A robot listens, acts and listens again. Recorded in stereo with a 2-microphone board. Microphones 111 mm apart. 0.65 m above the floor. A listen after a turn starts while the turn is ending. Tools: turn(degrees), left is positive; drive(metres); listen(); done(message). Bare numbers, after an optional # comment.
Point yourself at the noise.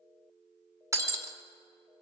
# The breaking glass: about 30° right or 150° right.
turn(-30)
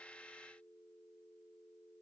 listen()
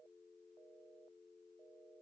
done("I heard breaking glass, but can't make it out now. It was about straight ahead or 120° right.")